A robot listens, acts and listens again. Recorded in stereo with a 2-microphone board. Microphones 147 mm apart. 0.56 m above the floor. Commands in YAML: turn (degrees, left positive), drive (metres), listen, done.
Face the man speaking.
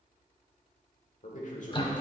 turn: 60
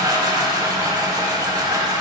listen: true
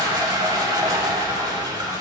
listen: true
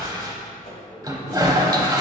done: "I heard a man speaking, but can't make it out now. It was about straight ahead or 60° left."